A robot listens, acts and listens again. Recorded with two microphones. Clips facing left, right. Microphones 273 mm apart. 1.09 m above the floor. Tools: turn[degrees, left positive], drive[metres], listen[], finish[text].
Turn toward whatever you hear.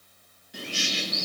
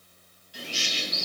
Thought: The bird: about 60° left or 120° left.
Action: turn[60]
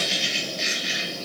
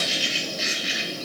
Action: finish[Found it: a bird, straight ahead, under 1 m away.]